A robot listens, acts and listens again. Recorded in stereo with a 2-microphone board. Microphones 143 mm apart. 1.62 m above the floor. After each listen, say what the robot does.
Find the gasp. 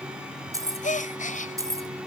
Turn 60° left.
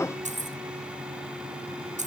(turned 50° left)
Keep listening.
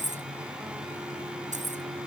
I heard a gasp, but can't make it out now. It was about 10° left or 70° left.